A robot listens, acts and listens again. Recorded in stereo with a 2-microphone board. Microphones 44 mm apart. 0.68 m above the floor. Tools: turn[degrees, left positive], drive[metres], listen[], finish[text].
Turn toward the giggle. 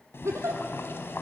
Action: turn[-90]
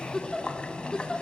Thought: So it is at 15° left.
Action: turn[15]
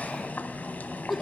Action: finish[Found it: a giggle, straight ahead, 2 to 4 m away.]